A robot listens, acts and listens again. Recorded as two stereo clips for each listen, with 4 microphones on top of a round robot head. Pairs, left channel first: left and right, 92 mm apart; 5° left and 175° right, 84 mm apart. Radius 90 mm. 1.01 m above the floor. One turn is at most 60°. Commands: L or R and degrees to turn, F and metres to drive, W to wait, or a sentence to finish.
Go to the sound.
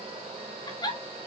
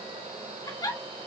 L45
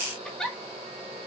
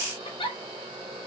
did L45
F1.0
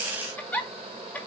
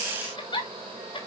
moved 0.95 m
L15
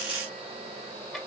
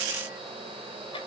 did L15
W
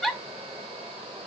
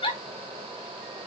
F1.0
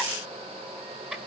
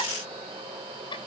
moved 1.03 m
R10
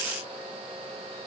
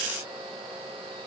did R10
W
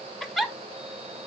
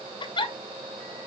F1.0
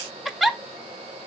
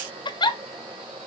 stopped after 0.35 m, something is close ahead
Arrived at the giggle, straight ahead.